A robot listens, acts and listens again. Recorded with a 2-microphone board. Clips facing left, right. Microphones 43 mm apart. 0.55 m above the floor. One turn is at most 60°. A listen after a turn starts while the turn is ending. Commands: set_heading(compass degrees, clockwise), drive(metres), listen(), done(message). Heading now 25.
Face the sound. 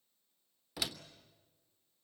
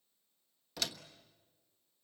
set_heading(355)
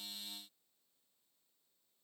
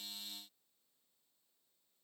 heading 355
listen()
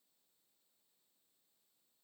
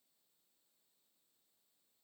done("I heard a door slam, but can't make it out now. It was about 20° right or 140° left.")